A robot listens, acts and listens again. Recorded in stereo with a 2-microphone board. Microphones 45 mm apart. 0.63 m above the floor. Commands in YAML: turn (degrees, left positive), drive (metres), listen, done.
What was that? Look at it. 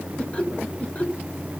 turn: 35
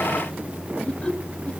turn: 25
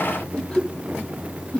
turn: 25
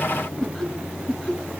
turn: 10
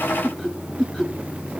done: "Found it: laughter, straight ahead, 2 to 4 m away."